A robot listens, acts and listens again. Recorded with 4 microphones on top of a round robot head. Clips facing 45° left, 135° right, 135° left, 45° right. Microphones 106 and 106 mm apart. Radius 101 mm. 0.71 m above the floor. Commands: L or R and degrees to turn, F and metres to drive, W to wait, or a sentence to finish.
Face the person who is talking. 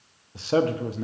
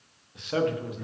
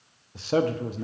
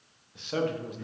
L95
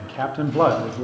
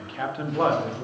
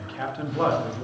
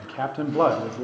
Facing the man speaking.